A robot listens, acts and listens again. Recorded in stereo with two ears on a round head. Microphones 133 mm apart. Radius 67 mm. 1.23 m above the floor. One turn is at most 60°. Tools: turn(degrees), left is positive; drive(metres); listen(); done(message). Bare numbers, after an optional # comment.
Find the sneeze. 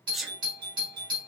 turn(30)
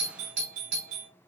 listen()
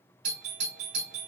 done("I heard a sneeze, but can't make it out now. It was about 30° right or 150° left.")